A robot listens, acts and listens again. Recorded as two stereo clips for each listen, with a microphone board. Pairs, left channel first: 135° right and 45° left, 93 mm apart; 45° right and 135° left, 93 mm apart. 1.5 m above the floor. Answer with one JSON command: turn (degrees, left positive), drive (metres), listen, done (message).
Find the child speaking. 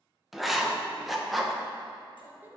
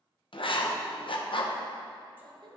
{"turn": 115}
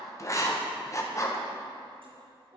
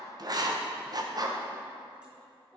{"turn": 35}
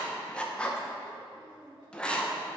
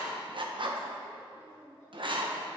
{"turn": 15}
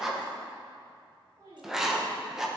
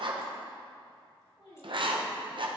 {"done": "Found it: a child speaking, straight ahead, 2 to 4 m away."}